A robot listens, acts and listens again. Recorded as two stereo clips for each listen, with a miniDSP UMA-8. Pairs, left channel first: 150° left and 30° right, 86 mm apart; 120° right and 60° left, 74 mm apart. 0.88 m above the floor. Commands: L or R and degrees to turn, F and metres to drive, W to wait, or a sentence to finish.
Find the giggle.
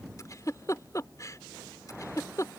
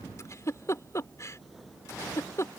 R165
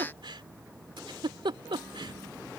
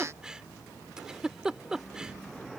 R20
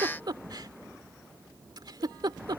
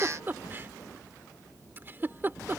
Facing the giggle.